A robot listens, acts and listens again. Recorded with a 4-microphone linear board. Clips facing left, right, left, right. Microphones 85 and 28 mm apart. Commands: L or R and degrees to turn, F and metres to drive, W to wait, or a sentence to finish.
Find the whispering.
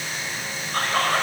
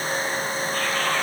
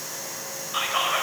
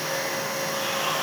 L45
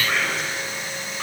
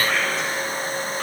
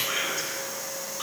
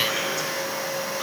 Facing the whispering, over 4 m away.